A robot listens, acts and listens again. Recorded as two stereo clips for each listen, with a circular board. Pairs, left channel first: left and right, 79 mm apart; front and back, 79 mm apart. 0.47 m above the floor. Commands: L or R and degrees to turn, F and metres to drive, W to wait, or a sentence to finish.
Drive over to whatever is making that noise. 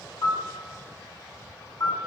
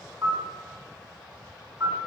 L115
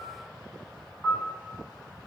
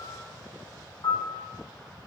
R10
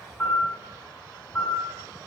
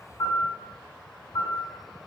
F1.0
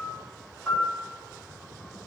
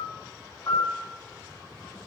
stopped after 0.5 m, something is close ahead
Blocked. The piano is further on, straight ahead.